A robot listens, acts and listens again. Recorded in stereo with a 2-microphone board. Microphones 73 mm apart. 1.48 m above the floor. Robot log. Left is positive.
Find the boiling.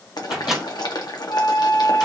note: The boiling: about 65° left or 115° left.
cmd yaw +65
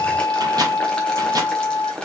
note: So it is at 15° left.
cmd yaw +15
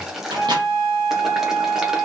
end: Found it: boiling, straight ahead, under 1 m away.